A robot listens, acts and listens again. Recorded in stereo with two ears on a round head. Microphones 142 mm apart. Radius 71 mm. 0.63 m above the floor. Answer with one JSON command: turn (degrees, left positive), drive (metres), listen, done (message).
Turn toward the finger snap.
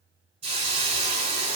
{"listen": true}
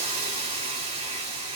{"listen": true}
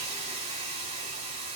{"done": "I can't make out a finger snap, only a hiss."}